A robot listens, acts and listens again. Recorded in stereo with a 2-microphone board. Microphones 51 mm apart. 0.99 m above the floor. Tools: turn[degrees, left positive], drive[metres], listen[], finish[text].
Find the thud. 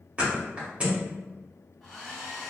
Thought: The thud: about 25° right or 155° right.
Action: turn[-25]
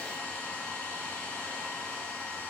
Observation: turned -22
Action: listen[]
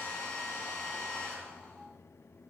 Action: finish[I heard a thud, but can't make it out now. It was about 5° right or 130° right.]